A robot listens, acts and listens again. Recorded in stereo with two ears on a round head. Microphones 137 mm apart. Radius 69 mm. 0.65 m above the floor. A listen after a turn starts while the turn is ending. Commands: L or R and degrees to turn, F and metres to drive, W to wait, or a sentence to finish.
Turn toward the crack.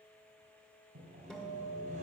W
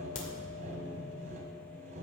L55
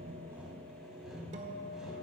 W
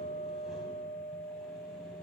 I heard a crack, but can't make it out now. It was about straight ahead or 70° left.